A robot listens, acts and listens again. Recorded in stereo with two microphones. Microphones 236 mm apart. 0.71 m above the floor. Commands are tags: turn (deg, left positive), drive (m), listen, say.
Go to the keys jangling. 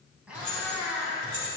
<turn deg="-55"/>
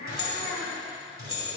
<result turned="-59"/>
<turn deg="-65"/>
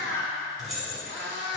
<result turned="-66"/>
<drive m="1.0"/>
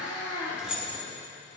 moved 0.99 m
<drive m="1.0"/>
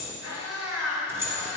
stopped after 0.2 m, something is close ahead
<turn deg="-10"/>
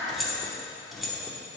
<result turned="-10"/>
<say>I am next to the keys jangling.</say>